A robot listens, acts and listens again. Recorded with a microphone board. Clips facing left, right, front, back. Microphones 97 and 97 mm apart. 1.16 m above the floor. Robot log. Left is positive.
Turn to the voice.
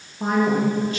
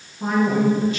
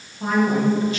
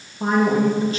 note: The man speaking: 130° left.
cmd yaw +130
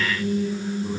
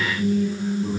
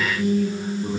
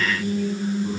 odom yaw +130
note: The man speaking is now 15° right.
cmd yaw -15
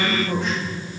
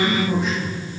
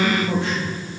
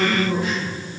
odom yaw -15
end: Found it: a man speaking, straight ahead.